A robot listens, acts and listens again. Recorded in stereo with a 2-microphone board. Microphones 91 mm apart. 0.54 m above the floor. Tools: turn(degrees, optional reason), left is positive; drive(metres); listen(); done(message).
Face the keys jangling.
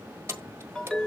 turn(degrees=-25, reason="The keys jangling: about 25° right or 155° right.")
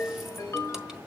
listen()
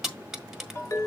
done("Facing the keys jangling, 1 to 2 m away.")